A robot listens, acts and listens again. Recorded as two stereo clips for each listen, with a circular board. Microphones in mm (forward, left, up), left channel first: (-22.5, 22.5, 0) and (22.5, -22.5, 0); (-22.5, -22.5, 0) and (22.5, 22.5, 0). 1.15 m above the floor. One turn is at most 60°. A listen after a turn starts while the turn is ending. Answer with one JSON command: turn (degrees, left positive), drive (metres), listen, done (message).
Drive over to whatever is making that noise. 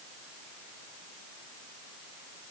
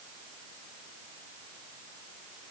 {"listen": true}
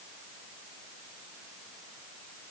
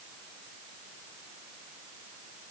{"listen": true}
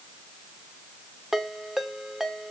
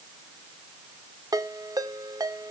{"turn": 40}
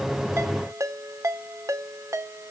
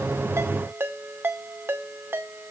{"turn": -10}
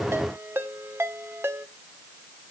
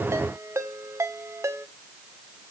{"drive": 1.0}
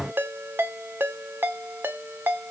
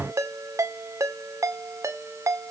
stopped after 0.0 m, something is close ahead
{"turn": 10}
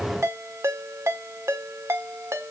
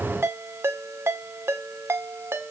{"done": "Blocked. The ringtone is further on, straight ahead."}